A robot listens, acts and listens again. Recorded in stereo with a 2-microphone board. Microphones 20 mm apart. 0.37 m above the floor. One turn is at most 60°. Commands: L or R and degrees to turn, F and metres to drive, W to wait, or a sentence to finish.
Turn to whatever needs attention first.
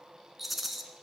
W
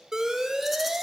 R25
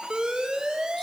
R60
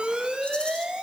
R60
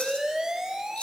R35
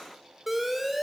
R10
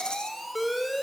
Found it: an alarm, straight ahead, 1 to 2 m away.